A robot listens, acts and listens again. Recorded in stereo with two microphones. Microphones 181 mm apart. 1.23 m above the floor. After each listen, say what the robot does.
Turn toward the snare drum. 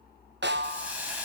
Turn 90° right.
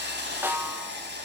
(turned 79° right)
Turn 10° right.
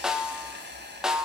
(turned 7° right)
Facing the snare drum, 1 to 2 m away.